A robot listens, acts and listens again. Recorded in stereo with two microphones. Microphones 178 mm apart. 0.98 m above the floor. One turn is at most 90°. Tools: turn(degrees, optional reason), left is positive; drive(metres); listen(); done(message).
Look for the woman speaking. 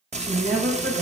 turn(degrees=-90)
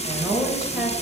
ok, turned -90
turn(degrees=-10, reason="So it is at 10° right.")
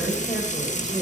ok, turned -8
listen()
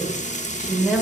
done("Found it: a woman speaking, straight ahead.")